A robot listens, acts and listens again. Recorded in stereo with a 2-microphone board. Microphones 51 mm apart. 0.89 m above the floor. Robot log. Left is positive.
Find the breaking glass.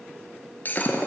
note: The breaking glass: about 35° left or 145° left.
cmd yaw +35
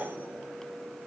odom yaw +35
cmd idle
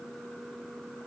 end: I heard breaking glass, but can't make it out now. It was about straight ahead or 110° left.